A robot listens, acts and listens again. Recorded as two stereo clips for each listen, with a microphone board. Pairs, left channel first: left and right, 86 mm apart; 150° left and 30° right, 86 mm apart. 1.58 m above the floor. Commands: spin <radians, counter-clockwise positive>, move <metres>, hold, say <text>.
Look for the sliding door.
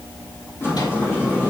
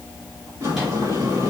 spin 0.52
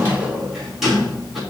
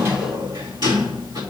say Found it: a sliding door, straight ahead, 2 to 4 m away.